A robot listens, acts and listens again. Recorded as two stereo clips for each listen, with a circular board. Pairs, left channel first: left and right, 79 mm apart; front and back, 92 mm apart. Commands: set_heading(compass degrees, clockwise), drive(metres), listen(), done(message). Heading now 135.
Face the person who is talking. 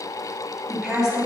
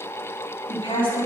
done("Facing the woman speaking, 2 to 4 m away.")